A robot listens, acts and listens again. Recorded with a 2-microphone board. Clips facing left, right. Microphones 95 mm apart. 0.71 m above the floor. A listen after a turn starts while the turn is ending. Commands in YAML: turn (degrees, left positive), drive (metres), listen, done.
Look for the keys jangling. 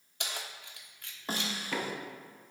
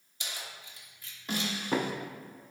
turn: 65
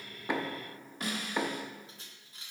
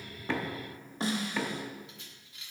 turn: 40
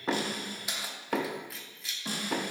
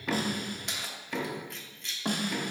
done: "Found it: keys jangling, straight ahead, 1 to 2 m away."